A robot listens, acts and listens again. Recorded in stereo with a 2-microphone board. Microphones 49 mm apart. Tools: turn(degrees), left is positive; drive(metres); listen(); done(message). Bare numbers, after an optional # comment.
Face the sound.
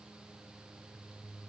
listen()
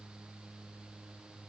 listen()
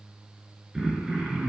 turn(-30)
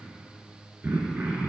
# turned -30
# So it is at 140° right.
turn(-140)
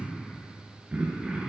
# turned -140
# The throat clearing is now 30° right.
turn(-30)
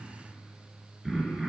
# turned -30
done("Found it: throat clearing, straight ahead.")